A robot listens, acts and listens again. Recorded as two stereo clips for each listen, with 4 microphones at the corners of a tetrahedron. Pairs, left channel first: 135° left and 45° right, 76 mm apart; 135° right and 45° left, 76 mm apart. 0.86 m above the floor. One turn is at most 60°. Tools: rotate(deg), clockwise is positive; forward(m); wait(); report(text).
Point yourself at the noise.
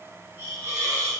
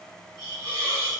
rotate(-15)
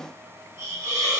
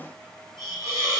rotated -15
report("Facing the hiss.")